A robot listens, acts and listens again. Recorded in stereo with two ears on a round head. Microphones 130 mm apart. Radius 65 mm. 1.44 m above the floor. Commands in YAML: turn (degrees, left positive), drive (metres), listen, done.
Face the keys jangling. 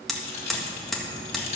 turn: 50
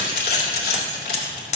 turn: 75
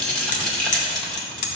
done: "Facing the keys jangling."